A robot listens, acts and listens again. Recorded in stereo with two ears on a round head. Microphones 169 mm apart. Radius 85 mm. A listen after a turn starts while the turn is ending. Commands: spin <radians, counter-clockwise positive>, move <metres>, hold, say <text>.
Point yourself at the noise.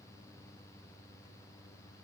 hold
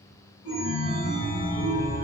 spin 1.13
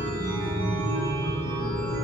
spin 0.26
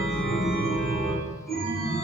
say Found it: a chime, straight ahead, under 1 m away.